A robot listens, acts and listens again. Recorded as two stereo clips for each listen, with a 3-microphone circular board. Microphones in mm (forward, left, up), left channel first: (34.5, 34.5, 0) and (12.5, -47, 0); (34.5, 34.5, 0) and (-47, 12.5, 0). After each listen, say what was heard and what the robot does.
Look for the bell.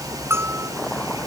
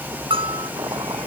The bell: 165° right. Turn 165° right.
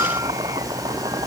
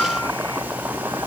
Keep listening.
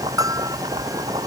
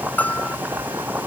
The bell is now 55° right. Turn 55° right.
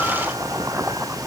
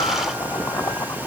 Keep listening.
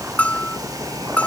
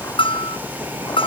Facing the bell.